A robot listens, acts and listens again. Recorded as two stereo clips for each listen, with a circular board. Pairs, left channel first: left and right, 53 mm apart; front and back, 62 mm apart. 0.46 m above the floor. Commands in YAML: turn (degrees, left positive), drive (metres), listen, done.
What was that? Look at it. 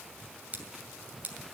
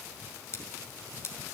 turn: -35
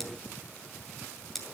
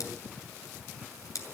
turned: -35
done: "Found it: scissors, straight ahead, 2 to 4 m away."